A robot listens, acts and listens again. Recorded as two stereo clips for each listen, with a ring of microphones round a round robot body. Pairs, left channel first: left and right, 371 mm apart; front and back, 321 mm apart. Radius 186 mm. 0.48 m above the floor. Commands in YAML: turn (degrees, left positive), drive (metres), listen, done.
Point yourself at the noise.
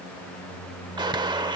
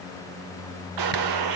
turn: -170
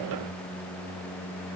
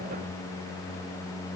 done: "I heard a gunshot from this way, but can't make it out now."